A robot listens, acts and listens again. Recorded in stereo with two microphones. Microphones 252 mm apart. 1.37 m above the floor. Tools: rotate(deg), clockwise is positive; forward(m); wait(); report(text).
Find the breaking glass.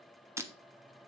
rotate(30)
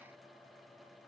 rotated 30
wait()
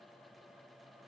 report("I heard breaking glass, but can't make it out now. It was about 20° left or 140° right.")